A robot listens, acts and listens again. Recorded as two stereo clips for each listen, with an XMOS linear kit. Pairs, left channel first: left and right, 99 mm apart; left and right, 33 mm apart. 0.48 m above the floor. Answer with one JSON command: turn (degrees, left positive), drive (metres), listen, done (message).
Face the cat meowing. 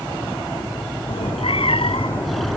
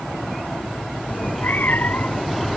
{"turn": 65}
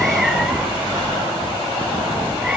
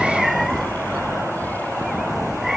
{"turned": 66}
{"turn": -10}
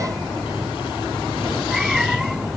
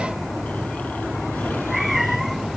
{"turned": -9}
{"done": "Facing the cat meowing."}